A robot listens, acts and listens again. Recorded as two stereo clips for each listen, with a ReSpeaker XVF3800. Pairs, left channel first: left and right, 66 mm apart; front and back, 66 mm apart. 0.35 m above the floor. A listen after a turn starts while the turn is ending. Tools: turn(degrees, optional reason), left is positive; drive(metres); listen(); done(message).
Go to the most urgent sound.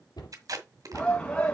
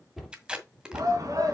turn(degrees=165, reason="The shout: 165° left.")
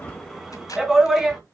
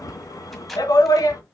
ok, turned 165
drive(metres=1.0)
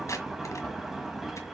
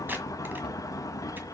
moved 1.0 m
listen()
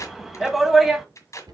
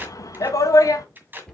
drive(metres=1.0)
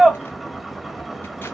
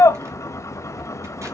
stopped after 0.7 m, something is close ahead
done("Arrived at the shout, straight ahead.")